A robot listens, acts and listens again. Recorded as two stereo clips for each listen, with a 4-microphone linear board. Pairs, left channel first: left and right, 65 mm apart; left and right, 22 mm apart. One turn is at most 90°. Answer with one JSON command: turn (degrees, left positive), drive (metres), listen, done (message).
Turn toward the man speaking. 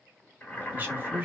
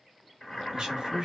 {"turn": -25}
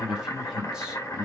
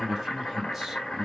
{"turn": -30}
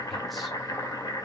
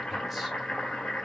{"listen": true}
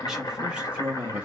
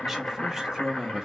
{"turn": -20}
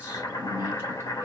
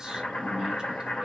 {"turn": -30}
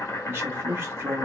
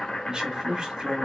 {"turn": -25}
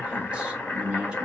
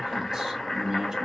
{"turn": -30}
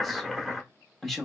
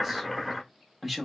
{"done": "Facing the man speaking, 1 to 2 m away."}